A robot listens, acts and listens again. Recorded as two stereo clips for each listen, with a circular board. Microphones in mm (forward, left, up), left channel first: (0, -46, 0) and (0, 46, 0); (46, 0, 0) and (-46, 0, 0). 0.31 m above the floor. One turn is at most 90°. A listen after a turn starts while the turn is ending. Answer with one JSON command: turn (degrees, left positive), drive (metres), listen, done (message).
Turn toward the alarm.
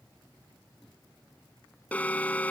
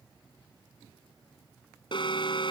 {"turn": -20}
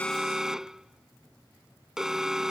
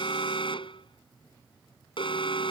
{"done": "Found it: an alarm, straight ahead."}